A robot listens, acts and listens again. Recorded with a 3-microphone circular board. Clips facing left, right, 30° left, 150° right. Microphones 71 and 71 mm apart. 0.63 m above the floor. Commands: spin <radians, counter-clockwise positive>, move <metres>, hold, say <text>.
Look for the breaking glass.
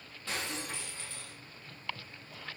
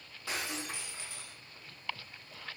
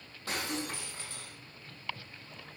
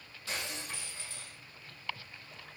spin -0.17
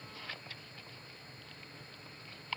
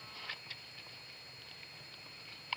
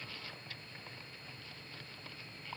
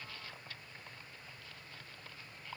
say Facing where the breaking glass came from. I can't hear it now.